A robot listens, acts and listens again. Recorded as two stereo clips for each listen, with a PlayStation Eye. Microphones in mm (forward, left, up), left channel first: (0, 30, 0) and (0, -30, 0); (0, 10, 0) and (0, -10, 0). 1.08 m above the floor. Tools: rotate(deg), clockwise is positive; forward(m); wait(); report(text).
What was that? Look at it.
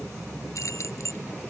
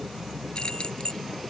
rotate(-50)
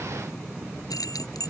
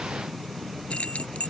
rotate(-80)
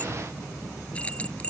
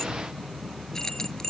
rotate(-20)
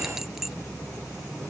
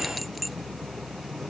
wait()
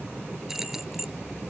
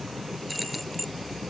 report("Found it: keys jangling, straight ahead.")